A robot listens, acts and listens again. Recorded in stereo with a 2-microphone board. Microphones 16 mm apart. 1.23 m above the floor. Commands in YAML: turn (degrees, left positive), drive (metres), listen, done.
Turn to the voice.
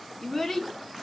turn: 25
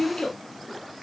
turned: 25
turn: 130
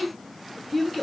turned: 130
done: "Found it: a child speaking, straight ahead."